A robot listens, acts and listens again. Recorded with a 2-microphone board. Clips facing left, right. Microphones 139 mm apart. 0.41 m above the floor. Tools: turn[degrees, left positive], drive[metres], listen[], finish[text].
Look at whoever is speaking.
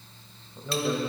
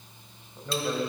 Action: turn[30]
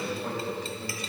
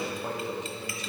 Thought: So it is at 30° right.
Action: turn[-30]
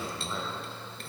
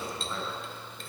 Action: finish[Facing the man speaking.]